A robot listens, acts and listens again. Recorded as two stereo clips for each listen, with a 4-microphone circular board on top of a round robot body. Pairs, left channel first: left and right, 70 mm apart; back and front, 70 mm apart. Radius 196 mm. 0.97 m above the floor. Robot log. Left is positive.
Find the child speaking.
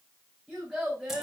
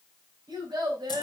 end: Facing the child speaking, 2 to 4 m away.